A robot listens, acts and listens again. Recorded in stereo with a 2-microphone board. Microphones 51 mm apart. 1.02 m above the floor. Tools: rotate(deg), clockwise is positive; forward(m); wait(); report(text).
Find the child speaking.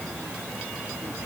wait()
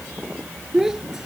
rotate(30)
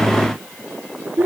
rotate(135)
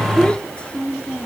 rotate(-20)
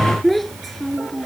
report("Found it: a child speaking, straight ahead.")